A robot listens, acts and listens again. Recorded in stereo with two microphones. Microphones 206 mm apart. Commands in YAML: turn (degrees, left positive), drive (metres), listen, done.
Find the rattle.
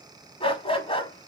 listen: true
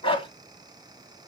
listen: true
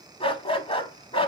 done: "I can't make out a rattle, only a dog barking."